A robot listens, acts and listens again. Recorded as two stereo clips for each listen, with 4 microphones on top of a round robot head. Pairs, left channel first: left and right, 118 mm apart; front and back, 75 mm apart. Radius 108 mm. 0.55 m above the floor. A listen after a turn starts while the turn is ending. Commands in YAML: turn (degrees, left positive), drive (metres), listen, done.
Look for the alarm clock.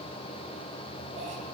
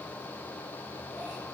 listen: true
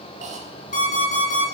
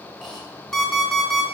turn: 85
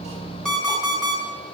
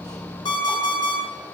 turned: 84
done: "Facing the alarm clock."